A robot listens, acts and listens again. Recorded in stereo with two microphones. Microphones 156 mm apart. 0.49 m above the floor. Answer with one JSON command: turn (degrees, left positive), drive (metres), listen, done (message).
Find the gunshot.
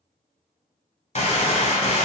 {"turn": 45}
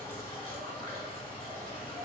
{"listen": true}
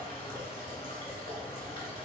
{"done": "I heard a gunshot, but can't make it out now. It was about straight ahead or 90° left."}